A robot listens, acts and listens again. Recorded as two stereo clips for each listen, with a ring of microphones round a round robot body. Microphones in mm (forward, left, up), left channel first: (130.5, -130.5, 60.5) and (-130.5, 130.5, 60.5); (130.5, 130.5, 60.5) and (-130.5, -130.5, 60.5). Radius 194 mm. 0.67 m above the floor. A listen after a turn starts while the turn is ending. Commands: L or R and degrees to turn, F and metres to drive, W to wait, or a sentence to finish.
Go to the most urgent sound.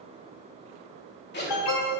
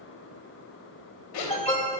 R30
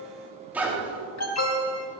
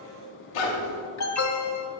F1.0
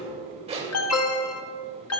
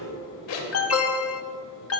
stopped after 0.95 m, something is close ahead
I am next to the alarm.